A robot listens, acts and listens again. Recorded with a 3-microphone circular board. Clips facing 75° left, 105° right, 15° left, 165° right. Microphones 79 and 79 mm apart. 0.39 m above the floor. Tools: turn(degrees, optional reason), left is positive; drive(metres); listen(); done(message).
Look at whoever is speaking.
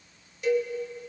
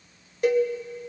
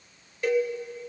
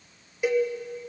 listen()
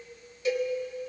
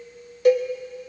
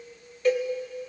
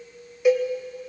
listen()
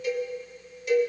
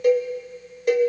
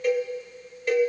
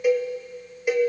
done("I can't make out anyone speaking, only a cowbell.")